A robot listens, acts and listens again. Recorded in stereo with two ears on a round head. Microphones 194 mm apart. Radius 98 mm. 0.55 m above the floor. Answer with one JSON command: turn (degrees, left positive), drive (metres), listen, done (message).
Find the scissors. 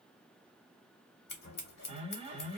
{"turn": 50}
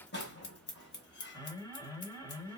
{"turn": 65}
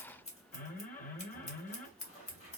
{"turn": 35}
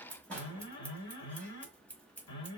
{"turn": 10}
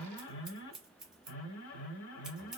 {"done": "Found it: scissors, straight ahead."}